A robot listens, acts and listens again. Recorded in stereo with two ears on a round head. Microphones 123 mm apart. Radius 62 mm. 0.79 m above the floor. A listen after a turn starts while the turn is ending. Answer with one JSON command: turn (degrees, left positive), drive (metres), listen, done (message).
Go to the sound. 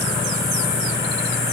{"listen": true}
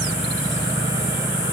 {"listen": true}
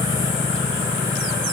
{"done": "I can't make out anything."}